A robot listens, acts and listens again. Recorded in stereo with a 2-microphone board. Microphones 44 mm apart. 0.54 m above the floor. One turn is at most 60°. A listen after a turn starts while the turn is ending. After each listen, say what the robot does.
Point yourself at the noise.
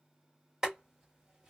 Turn 15° right.
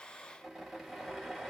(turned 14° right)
Found it: boiling, straight ahead, 2 to 4 m away.